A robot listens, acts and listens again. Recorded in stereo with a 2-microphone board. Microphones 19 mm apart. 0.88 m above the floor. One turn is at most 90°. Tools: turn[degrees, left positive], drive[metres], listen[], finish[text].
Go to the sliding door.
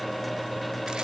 Action: listen[]
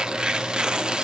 Action: listen[]
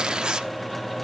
Action: finish[I can't make out a sliding door, only tearing paper.]